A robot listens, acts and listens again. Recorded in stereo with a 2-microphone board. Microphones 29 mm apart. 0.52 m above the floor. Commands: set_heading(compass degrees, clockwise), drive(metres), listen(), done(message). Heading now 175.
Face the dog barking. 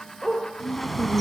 set_heading(145)
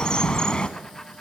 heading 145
listen()
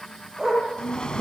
set_heading(160)
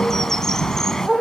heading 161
done("Found it: a dog barking, straight ahead.")